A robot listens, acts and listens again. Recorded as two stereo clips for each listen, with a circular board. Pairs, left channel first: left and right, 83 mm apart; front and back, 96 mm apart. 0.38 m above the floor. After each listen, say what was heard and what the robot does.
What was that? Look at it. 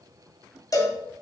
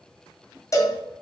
The cowbell: 50° left. Turn 50° left.
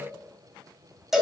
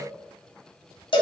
Facing the cowbell.